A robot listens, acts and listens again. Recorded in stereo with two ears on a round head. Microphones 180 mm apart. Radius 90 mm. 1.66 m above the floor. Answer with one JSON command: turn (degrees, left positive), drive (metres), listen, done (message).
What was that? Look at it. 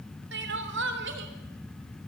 {"turn": -65}
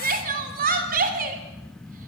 {"turn": -45}
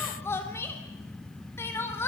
{"turn": 15}
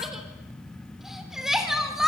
{"done": "Facing the crying, 2 to 4 m away."}